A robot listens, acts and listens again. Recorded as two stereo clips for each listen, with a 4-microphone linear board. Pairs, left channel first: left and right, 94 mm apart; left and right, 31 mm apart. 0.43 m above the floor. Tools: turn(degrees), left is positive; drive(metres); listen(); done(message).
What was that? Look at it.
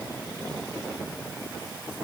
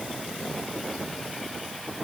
listen()
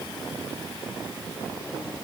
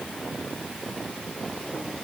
listen()
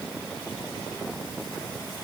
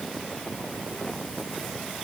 done("I can't make out anything to turn to.")